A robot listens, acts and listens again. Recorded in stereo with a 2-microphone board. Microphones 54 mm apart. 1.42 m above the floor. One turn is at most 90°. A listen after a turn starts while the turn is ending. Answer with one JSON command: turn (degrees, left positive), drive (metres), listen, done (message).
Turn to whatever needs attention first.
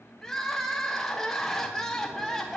{"turn": 30}
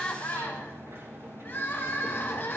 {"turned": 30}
{"turn": 90}
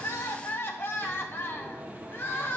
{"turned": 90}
{"turn": 45}
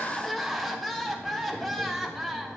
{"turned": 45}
{"done": "Facing the crying."}